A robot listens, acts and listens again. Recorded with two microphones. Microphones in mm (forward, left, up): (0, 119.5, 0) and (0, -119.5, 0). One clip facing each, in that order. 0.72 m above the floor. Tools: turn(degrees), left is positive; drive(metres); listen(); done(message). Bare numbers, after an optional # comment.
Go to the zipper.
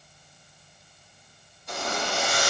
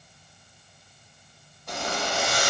# The zipper: about 65° right or 115° right.
turn(-65)
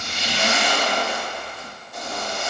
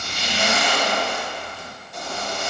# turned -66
drive(1.0)
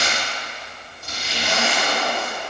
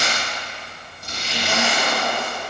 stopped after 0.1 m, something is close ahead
done("Blocked. The zipper is further on, straight ahead.")